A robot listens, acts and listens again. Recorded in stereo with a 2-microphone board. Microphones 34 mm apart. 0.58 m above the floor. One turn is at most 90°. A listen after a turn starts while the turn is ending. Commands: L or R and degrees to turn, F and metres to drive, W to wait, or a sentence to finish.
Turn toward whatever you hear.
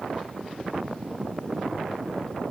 W
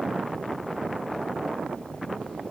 W
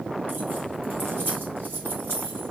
R65
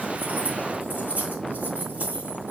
R55
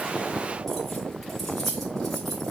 Found it: keys jangling, straight ahead.